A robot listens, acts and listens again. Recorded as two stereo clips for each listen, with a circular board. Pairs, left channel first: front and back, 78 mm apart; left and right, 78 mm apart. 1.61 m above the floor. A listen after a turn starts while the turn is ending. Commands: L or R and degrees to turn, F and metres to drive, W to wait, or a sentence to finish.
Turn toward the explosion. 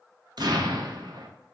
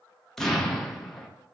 L175
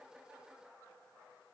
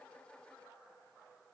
I heard an explosion from this way, but can't make it out now.